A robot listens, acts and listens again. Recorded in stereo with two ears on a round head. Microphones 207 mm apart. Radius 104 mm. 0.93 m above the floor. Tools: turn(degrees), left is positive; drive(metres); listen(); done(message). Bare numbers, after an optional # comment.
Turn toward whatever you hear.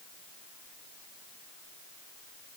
listen()
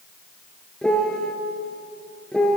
turn(30)
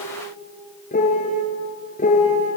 # So it is at 145° left.
turn(145)
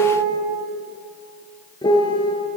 # The piano is now 20° left.
turn(20)
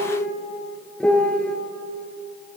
done("Facing the piano, 2 to 4 m away.")